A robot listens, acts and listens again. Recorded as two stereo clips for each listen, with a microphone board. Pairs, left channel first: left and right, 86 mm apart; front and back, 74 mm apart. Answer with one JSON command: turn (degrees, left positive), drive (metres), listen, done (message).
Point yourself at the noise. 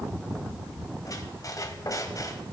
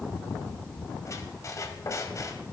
{"turn": 45}
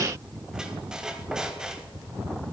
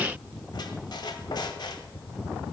{"turn": -10}
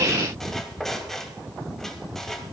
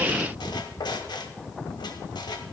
{"done": "Facing the squeak."}